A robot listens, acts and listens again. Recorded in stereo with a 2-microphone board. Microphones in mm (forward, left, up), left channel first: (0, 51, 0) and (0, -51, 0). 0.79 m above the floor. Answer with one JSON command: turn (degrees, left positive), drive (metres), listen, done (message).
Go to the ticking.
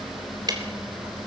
{"turn": -40}
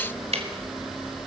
{"turn": -100}
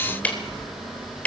{"turn": 15}
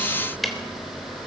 {"drive": 1.0}
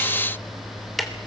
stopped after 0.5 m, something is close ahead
{"done": "Something is in my way. I am facing the ticking but have not reached it."}